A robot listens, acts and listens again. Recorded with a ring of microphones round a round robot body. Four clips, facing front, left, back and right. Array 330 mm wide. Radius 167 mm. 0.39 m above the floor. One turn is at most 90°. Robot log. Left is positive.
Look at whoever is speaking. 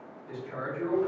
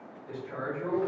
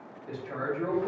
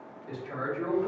note: The man speaking: 140° right.
cmd yaw -90
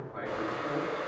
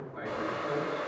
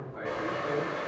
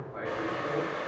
note: The man speaking is now 60° right.
cmd yaw -60
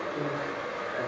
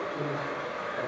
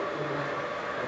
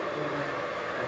cmd idle
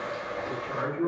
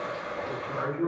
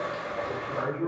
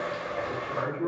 note: The man speaking is now 10° left.
cmd yaw +10
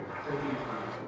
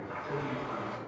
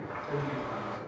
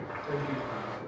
cmd idle
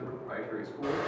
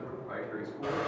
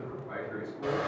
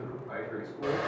end: Facing the man speaking.